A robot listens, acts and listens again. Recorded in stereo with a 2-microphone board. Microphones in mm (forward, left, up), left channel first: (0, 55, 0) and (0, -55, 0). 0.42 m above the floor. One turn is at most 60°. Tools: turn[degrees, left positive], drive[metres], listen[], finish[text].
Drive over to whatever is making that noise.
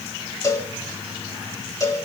Thought: The cowbell: about 30° left or 150° left.
Action: turn[30]
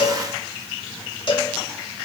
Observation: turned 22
Thought: So it is at 125° left.
Action: turn[60]
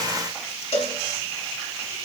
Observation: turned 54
Thought: The cowbell is now 70° left.
Action: turn[60]
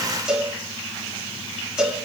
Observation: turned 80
Action: drive[1.0]
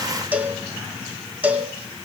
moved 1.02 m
Thought: The cowbell is now 15° right.
Action: turn[-15]
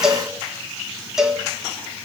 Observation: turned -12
Action: drive[1.0]
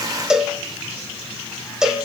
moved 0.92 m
Action: drive[1.0]
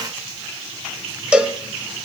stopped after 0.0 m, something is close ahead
Thought: The cowbell is now 10° right.
Action: turn[-10]
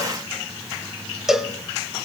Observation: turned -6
Action: finish[I am next to the cowbell.]